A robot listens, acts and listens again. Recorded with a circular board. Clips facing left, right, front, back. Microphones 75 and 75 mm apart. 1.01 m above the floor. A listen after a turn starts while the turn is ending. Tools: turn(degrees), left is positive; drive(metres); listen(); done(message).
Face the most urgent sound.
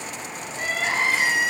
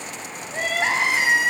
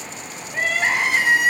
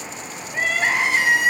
turn(degrees=-90)
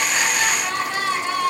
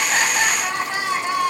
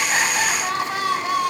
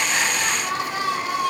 turn(degrees=-20)
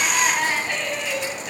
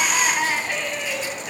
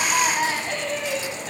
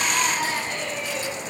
done("Facing the crying, 2 to 4 m away.")